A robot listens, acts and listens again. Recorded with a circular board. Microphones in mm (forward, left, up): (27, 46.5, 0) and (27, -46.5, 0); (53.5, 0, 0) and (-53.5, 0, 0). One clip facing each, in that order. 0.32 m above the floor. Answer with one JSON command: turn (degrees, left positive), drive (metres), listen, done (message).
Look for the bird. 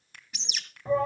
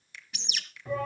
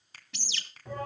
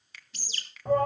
{"done": "Facing the bird."}